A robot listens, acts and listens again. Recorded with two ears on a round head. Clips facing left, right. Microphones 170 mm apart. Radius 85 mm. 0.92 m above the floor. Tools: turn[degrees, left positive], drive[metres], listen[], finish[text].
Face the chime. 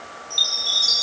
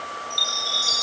Thought: The chime: about 30° left or 150° left.
Action: turn[30]
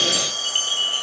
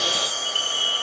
Thought: So it is at 120° left.
Action: turn[120]
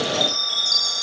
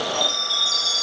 Thought: The chime is now 25° left.
Action: turn[25]
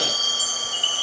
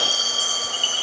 Thought: The chime is now 10° left.
Action: turn[10]
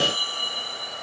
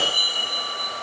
Action: finish[Found it: a chime, straight ahead.]